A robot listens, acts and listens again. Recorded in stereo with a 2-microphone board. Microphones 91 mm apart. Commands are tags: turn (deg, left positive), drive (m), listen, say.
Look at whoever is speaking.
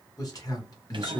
<turn deg="40"/>
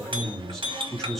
<say>Found it: a man speaking, straight ahead.</say>